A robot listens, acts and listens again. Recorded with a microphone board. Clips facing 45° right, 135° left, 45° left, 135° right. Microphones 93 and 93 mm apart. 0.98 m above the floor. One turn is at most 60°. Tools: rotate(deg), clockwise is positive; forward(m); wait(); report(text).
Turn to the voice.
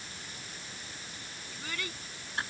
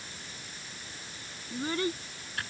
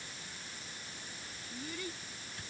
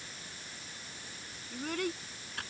rotate(60)
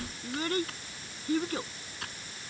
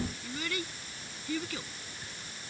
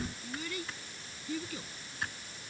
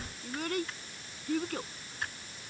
rotate(60)
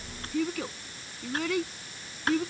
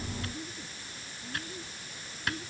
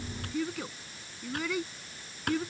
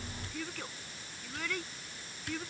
rotate(40)
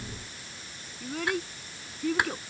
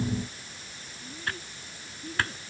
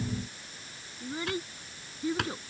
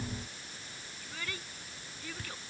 rotate(25)
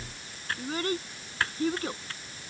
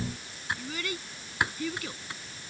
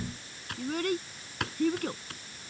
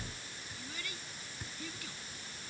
report("Found it: a child speaking, straight ahead.")